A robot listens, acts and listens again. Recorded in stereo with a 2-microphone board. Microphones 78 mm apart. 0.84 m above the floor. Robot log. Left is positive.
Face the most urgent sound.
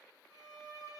cmd idle
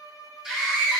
cmd yaw -30
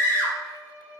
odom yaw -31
note: So it is at 25° left.
cmd yaw +25
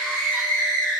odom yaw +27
end: Facing the scream.